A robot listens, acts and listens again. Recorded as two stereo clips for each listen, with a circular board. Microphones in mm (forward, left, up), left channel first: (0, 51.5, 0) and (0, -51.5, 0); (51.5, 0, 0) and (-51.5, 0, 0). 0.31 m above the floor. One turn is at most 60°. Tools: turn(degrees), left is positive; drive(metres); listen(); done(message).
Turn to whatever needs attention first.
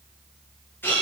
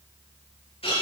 listen()
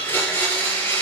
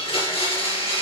listen()
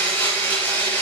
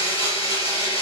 done("I can't make out anything urgent to turn to.")